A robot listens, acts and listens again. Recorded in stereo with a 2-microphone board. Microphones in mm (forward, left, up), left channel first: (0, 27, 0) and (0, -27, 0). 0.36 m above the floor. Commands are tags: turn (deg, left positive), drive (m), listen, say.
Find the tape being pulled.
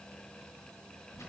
<listen/>
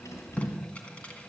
<turn deg="25"/>
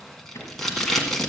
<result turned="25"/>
<say>Facing the tape being pulled.</say>